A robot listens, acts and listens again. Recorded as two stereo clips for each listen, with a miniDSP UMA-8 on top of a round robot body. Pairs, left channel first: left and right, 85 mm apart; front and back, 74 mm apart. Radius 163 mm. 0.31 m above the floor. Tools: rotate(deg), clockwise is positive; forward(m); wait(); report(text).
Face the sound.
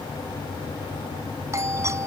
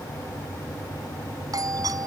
rotate(145)
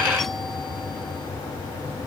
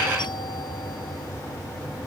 wait()
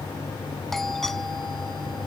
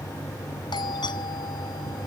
report("Facing the doorbell.")